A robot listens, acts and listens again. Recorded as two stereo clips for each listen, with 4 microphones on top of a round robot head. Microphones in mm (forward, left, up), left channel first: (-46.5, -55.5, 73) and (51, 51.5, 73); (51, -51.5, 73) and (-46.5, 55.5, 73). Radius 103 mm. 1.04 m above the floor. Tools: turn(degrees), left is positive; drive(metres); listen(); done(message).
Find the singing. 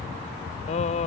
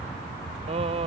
turn(degrees=-175)
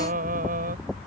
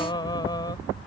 turn(degrees=15)
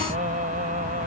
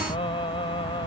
turn(degrees=10)
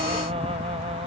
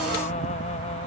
done("Facing the singing.")